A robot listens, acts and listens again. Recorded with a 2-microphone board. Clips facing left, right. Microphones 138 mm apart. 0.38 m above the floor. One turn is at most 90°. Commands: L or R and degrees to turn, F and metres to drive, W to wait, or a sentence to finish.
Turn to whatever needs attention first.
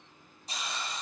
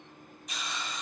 W
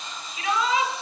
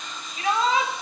R40
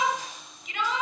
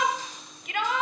R90
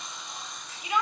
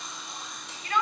L15
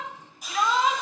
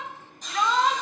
Found it: a shout, straight ahead.